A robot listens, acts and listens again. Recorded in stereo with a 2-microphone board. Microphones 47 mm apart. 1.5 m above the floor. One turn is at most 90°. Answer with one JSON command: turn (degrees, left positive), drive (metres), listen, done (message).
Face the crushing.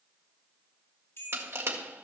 {"turn": -65}
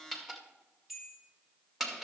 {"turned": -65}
{"done": "Found it: crushing, straight ahead, 1 to 2 m away."}